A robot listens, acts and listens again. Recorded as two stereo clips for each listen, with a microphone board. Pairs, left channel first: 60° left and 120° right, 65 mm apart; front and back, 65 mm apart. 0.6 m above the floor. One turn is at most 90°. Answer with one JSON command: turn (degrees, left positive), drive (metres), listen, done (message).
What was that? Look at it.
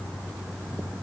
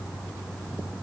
{"listen": true}
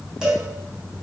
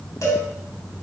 {"turn": -40}
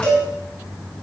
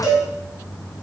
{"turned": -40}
{"turn": -10}
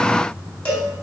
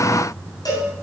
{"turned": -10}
{"turn": -10}
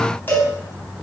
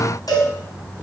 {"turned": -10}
{"done": "Facing the cowbell, 2 to 4 m away."}